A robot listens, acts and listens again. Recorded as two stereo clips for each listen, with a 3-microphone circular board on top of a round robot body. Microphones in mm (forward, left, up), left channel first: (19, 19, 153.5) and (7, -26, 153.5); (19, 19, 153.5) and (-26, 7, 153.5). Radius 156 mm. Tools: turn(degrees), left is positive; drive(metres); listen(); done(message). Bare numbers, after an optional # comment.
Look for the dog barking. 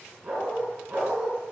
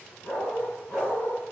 # The dog barking: 25° right.
turn(-25)
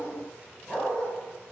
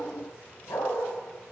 done("Found it: a dog barking, straight ahead.")